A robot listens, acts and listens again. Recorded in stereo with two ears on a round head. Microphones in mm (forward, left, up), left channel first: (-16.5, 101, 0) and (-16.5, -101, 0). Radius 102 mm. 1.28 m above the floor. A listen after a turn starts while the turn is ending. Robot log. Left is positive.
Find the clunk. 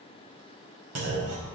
cmd yaw -90
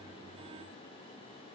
end: Facing where the clunk came from. I can't hear it now.